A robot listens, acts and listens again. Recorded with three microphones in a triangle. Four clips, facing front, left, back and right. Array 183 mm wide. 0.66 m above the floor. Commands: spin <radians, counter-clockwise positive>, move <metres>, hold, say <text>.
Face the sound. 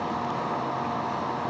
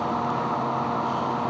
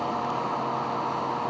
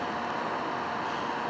hold
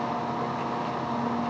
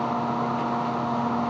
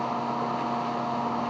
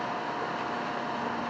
hold
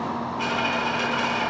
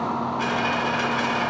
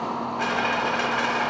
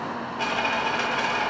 spin -2.36
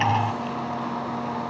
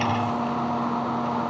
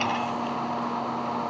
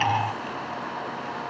say I heard a dropped coin from this way, but can't make it out now.